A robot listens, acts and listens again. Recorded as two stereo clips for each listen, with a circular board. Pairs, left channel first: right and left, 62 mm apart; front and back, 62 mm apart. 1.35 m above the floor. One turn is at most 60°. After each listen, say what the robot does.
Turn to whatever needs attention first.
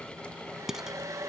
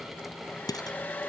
Keep listening.
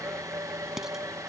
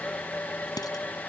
Keep listening.
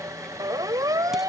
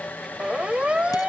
Turn 60° left.
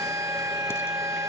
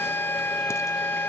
Turn 55° left.
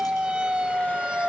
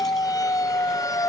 Turn 15° left.
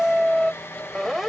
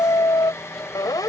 Facing the siren.